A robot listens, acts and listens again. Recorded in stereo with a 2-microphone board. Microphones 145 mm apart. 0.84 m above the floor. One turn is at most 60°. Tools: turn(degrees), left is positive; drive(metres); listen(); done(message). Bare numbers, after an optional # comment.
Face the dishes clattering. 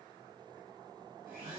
listen()
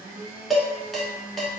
turn(30)
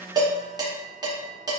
# So it is at 25° right.
turn(-25)
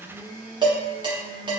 # The dishes clattering is now 30° right.
turn(-30)
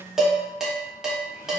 done("Found it: dishes clattering, straight ahead, under 1 m away.")